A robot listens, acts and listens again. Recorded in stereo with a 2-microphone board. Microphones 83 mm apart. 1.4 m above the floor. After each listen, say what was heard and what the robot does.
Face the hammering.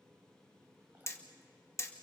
The hammering: about 40° left or 140° left. Turn 40° left.
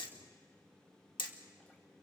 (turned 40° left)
So it is at 100° left. Turn 100° left.
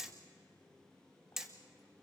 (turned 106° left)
Found it: hammering, straight ahead.